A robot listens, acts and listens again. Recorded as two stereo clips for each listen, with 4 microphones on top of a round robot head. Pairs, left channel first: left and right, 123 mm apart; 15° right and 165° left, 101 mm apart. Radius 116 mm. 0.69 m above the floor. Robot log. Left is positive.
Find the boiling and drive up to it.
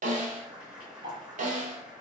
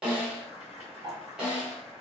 cmd fwd 1.0
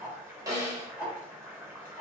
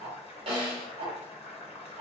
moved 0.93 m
note: The boiling is now 15° right.
cmd yaw -15
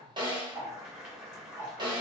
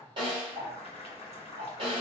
cmd fwd 1.0
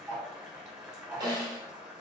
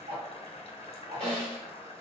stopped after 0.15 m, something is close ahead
end: I am next to the boiling.